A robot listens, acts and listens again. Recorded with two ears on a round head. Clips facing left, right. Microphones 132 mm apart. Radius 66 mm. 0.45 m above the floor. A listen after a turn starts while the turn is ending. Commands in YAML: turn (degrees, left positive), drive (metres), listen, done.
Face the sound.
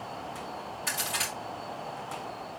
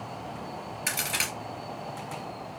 turn: -90
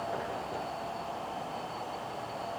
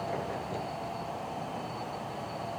done: "Facing where the crack came from. I can't hear it now."